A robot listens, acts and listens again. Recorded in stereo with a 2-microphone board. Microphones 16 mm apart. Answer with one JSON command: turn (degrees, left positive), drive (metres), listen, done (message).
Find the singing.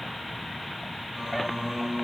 {"turn": -55}
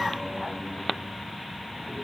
{"listen": true}
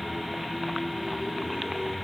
{"turn": -65}
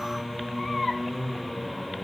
{"turn": -40}
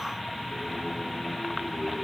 {"listen": true}
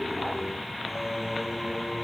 {"turn": 10}
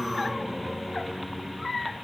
{"done": "Found it: singing, straight ahead, over 4 m away."}